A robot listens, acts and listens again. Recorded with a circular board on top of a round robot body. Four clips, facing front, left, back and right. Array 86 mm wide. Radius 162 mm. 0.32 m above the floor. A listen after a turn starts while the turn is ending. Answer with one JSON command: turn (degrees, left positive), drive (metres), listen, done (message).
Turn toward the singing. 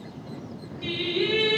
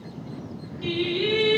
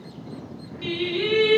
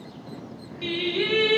{"turn": -105}
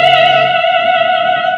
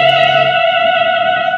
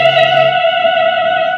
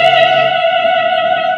{"turn": 45}
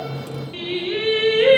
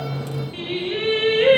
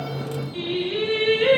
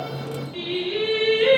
{"turn": 40}
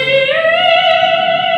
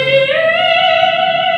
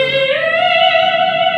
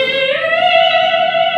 {"turn": 40}
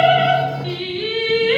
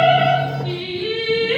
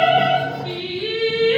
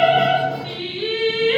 {"turn": -15}
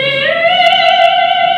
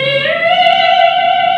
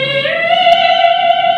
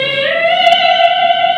{"done": "Found it: singing, straight ahead, 1 to 2 m away."}